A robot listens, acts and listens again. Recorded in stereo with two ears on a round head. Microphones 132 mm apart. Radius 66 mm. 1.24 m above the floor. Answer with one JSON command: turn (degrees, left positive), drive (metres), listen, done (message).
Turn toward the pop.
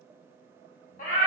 {"listen": true}
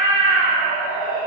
{"listen": true}
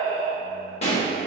{"turn": 45}
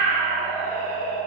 {"listen": true}
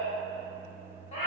{"done": "I heard a pop, but can't make it out now. It was about straight ahead or 90° left."}